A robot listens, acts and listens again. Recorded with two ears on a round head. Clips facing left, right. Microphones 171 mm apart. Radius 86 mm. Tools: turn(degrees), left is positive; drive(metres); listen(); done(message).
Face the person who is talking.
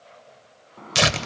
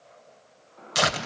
listen()
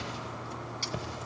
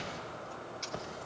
listen()
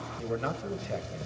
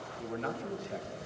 turn(degrees=60)
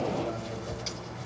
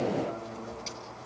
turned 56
listen()
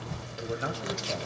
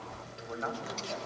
turn(degrees=45)
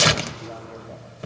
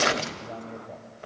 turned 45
listen()
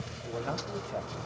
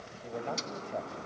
done("Facing the man speaking, 2 to 4 m away.")